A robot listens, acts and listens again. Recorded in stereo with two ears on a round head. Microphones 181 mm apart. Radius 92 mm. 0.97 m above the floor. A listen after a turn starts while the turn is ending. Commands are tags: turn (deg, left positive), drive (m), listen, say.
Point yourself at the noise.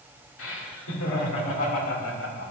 <turn deg="75"/>
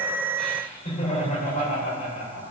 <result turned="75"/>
<turn deg="35"/>
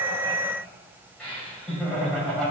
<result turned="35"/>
<say>Found it: laughter, straight ahead.</say>